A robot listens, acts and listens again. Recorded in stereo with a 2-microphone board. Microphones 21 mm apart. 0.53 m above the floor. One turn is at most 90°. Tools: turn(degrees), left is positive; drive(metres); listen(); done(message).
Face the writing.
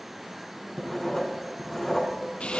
turn(degrees=20)
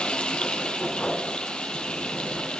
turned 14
turn(degrees=90)
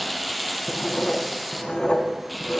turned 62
turn(degrees=85)
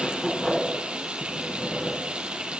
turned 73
turn(degrees=15)
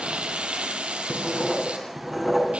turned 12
done("Facing the writing.")